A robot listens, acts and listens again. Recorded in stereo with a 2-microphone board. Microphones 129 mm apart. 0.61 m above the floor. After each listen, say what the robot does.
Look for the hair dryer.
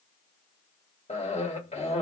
Keep listening.
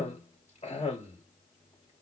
Keep listening.
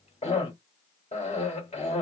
I can't make out a hair dryer, only a cough.